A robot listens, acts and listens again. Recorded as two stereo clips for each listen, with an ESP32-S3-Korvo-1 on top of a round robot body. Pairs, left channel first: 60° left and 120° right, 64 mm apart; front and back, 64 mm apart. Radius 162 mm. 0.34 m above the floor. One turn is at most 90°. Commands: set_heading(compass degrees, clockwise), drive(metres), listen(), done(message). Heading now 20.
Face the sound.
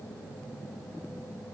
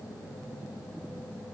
listen()
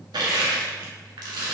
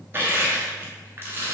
set_heading(110)
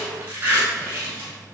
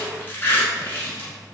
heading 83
set_heading(143)
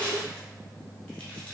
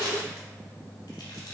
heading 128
set_heading(143)
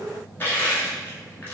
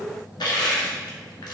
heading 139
done("Facing the crushing.")